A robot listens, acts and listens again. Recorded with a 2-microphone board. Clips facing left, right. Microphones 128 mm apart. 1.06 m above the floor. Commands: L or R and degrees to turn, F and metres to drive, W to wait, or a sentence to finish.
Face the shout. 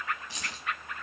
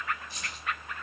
W
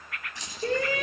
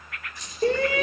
R60
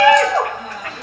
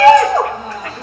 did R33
R30
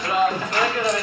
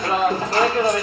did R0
R35
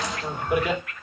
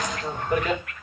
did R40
L10
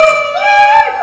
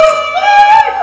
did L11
Facing the shout, 1 to 2 m away.